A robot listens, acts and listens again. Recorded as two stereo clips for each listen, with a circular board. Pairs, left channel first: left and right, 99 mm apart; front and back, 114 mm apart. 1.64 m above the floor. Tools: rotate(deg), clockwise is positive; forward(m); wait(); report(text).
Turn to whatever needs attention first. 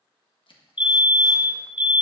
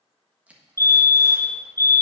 rotate(-65)
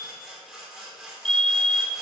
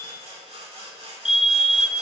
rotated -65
rotate(-10)
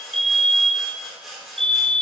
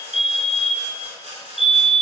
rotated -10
report("Found it: a fire alarm, straight ahead.")